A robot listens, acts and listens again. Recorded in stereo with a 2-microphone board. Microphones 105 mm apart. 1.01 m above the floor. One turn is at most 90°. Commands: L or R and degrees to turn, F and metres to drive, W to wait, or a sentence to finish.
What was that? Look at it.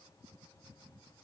W
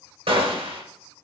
R65
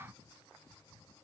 W
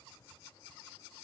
I heard a gunshot, but can't make it out now. It was about straight ahead or 50° right.